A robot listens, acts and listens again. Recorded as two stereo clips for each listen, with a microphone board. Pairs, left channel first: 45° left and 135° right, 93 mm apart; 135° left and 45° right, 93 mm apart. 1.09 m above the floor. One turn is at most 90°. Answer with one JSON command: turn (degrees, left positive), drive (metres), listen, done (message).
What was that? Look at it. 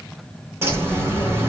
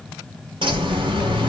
{"turn": -70}
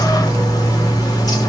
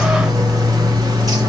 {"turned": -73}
{"done": "Facing the bird, 2 to 4 m away."}